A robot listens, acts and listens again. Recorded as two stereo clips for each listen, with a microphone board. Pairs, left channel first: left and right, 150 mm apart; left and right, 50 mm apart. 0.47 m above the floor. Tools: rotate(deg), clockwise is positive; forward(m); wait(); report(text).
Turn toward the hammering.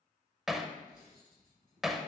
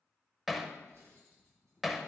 rotate(-30)
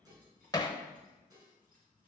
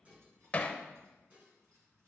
rotate(-155)
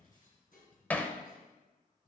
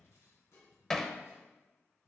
rotate(-10)
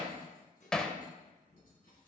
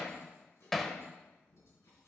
report("Facing the hammering.")